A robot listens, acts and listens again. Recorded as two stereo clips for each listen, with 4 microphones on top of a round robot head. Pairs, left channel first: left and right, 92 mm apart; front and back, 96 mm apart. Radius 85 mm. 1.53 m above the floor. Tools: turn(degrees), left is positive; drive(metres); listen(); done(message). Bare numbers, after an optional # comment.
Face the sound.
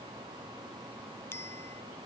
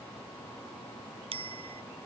# The bicycle bell: 160° left.
turn(160)
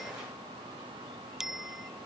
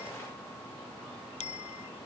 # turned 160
done("Found it: a bicycle bell, straight ahead.")